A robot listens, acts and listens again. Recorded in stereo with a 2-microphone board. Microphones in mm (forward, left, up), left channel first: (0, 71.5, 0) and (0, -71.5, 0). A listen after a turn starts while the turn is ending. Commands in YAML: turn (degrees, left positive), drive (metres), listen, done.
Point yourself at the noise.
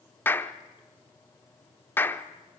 turn: 30
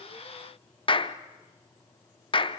turn: 135
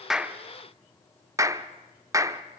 turn: -25
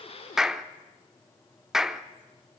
done: "Facing the clap."